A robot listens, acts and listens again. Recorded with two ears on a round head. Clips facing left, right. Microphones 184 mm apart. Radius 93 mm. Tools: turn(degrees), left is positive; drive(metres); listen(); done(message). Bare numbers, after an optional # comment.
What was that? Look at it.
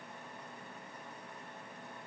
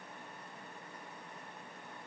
listen()
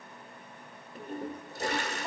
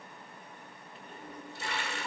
# The toilet flushing: about 35° left or 145° left.
turn(35)
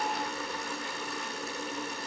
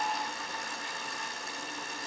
# So it is at 105° left.
turn(105)
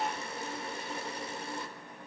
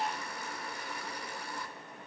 # The toilet flushing is now 20° left.
turn(20)
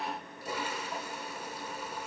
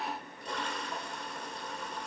done("Facing the toilet flushing.")